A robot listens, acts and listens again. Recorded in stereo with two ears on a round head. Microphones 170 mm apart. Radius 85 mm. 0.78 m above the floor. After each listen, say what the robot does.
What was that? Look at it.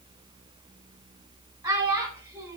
Turn 30° right.
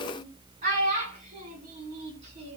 Turn 140° right.
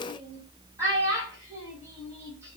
Turn 15° right.
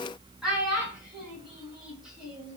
Found it: a child speaking, straight ahead, over 4 m away.